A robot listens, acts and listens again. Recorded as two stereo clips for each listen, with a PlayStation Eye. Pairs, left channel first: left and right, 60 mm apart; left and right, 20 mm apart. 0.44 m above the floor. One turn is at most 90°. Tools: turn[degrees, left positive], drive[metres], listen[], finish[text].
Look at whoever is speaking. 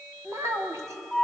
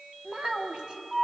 Thought: The child speaking: about 55° right or 125° right.
Action: turn[-55]
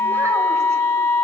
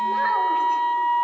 Action: listen[]
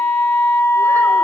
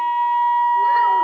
Action: listen[]
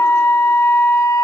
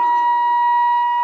Action: finish[I heard a child speaking, but can't make it out now. It was about straight ahead or 70° right.]